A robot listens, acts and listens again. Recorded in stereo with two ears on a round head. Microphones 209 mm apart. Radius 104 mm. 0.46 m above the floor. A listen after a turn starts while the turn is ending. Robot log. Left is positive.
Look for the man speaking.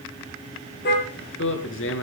note: The man speaking: about 60° left or 120° left.
cmd yaw +60
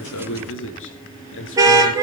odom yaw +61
note: So it is at 55° left.
cmd yaw +55
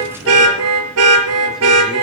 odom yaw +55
cmd idle
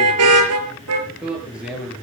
end: Found it: a man speaking, straight ahead, over 4 m away.